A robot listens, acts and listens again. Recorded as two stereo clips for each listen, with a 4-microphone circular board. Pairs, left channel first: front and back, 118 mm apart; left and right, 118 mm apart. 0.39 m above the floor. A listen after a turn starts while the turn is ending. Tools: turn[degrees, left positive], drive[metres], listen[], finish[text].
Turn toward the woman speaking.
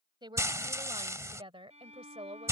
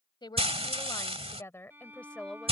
Thought: The woman speaking: 175° left.
Action: turn[175]
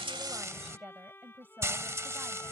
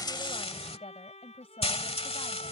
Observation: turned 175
Thought: The woman speaking is now 110° left.
Action: turn[110]
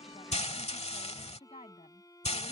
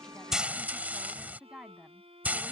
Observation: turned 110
Action: finish[Facing the woman speaking.]